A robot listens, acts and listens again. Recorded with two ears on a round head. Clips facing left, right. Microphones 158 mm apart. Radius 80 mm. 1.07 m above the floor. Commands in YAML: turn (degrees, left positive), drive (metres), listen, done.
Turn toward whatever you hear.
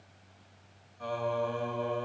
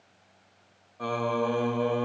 turn: -65
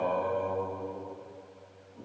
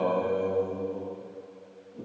turn: -40
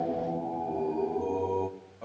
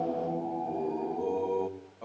done: "Facing the singing, 1 to 2 m away."